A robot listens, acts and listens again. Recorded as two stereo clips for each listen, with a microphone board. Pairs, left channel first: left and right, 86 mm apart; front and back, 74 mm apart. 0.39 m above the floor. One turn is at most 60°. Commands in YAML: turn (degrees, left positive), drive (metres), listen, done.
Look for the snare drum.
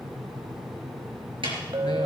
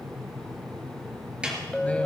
turn: -60
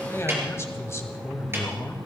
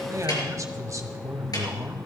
turn: -30
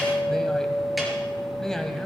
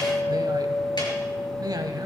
listen: true
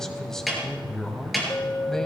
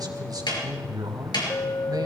done: "Found it: a snare drum, straight ahead, over 4 m away."